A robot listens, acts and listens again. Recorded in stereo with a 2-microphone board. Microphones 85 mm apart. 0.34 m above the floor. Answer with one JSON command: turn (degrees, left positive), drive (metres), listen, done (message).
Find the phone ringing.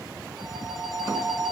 {"turn": -30}
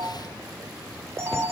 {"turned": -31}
{"turn": -145}
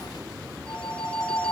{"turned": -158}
{"turn": 10}
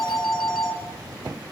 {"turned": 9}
{"done": "Facing the phone ringing."}